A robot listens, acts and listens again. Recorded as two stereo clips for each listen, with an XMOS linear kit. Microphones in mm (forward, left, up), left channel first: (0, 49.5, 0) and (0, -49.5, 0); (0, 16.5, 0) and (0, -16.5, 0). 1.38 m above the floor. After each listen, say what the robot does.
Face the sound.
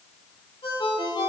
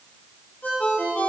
Turn 60° left.
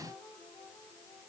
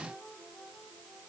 Keep listening.
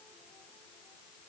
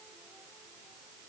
Keep listening.
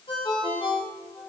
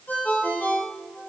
Turn 60° left.
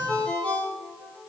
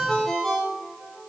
Turn 15° left.
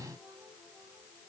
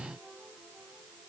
Keep listening.
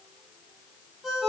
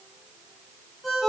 Found it: a ringtone, straight ahead, 2 to 4 m away.